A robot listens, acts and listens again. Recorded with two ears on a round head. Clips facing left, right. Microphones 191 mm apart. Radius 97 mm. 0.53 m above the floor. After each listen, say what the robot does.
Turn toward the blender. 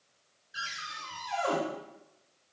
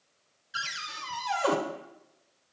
Keep listening.
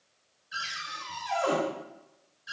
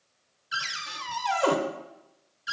Keep listening.
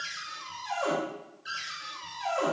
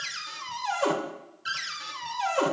I can't make out a blender, only a cupboard door.